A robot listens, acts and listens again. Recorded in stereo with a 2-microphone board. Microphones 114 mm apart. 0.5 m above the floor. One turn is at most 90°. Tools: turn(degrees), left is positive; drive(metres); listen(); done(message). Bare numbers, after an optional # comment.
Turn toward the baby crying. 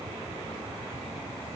listen()
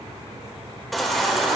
turn(30)
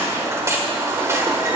# So it is at 30° right.
turn(-30)
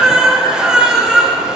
# The baby crying is now 10° right.
turn(-10)
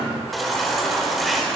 done("Facing the baby crying, 1 to 2 m away.")